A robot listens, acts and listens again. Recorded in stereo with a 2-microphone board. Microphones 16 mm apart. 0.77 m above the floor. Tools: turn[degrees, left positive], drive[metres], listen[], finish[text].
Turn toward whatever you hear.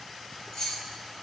Thought: The keys jangling: about 70° left or 110° left.
Action: turn[70]
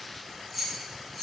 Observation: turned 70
Thought: So it is at 20° left.
Action: turn[20]
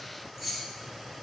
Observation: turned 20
Action: finish[Facing the keys jangling, 2 to 4 m away.]